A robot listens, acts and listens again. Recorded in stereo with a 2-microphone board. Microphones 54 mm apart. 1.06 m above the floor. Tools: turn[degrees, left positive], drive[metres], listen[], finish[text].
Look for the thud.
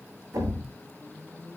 Action: turn[-90]
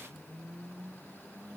Action: finish[Facing where the thud came from. I can't hear it now.]